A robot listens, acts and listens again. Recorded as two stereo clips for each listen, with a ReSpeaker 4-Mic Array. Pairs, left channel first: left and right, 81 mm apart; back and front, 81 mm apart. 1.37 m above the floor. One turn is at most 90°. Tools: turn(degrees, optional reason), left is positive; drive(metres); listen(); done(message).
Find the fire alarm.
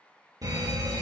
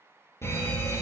turn(degrees=-90, reason="The fire alarm: 125° right.")
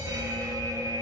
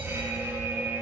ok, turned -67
turn(degrees=-60, reason="The fire alarm is now 60° right.")
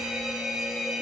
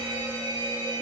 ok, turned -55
done("Facing the fire alarm.")